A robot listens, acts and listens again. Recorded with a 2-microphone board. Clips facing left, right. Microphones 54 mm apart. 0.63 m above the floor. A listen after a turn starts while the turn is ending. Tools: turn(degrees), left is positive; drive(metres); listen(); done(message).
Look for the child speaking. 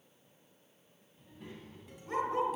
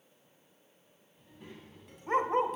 turn(degrees=30)
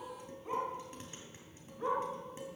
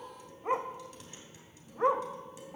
turn(degrees=-30)
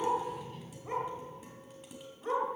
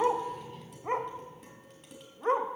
done("Found it: a child speaking, straight ahead.")